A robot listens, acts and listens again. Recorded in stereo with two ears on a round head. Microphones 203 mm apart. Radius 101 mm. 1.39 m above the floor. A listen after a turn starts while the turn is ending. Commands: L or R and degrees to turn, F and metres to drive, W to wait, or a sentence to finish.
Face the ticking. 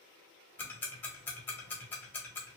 L30
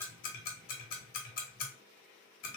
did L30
L140
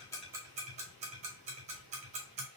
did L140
R30
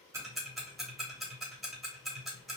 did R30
Facing the ticking, under 1 m away.